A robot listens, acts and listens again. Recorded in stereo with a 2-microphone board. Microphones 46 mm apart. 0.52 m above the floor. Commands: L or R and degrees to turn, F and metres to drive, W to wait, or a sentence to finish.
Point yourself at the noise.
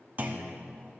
R35
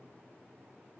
W
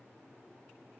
I heard a clunk, but can't make it out now. It was about straight ahead or 110° right.